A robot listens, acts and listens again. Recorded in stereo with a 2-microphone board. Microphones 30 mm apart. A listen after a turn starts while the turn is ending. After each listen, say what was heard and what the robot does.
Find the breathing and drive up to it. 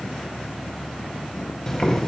Keep listening.
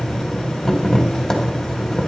Keep listening.
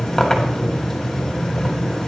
I can't make out breathing, only boiling.